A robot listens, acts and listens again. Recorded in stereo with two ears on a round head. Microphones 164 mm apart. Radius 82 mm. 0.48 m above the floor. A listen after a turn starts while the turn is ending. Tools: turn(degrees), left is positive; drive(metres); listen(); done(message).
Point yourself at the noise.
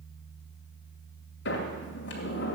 turn(degrees=65)
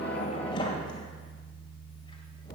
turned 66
turn(degrees=30)
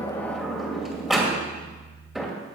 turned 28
done("Facing the sliding door, 2 to 4 m away.")